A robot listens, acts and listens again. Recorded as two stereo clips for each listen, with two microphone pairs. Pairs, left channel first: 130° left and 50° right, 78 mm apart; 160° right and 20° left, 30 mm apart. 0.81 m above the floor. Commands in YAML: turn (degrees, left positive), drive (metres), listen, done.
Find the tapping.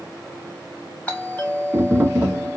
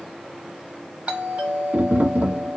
turn: 15
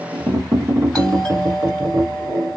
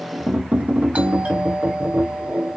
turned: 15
done: "Facing the tapping."